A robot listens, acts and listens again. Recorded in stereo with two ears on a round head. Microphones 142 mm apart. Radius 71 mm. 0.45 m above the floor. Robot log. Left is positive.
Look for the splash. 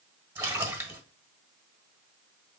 cmd yaw -30
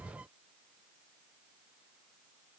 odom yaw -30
cmd idle
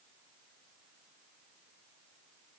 end: I heard a splash, but can't make it out now. It was about 15° left or 135° right.